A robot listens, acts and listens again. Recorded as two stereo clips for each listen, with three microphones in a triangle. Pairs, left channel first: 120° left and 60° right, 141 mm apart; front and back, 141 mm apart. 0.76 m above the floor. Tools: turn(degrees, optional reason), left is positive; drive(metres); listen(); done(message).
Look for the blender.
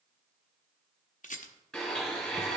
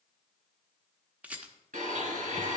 turn(degrees=-150, reason="The blender: 150° right.")
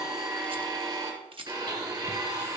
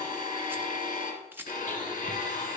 done("Found it: a blender, straight ahead, 2 to 4 m away.")